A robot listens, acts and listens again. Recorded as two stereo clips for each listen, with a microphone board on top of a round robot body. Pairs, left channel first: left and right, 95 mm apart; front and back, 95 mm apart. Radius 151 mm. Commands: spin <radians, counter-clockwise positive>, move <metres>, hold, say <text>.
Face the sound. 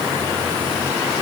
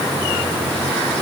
hold
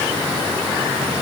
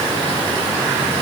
hold
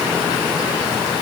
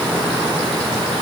say I can't make out anything.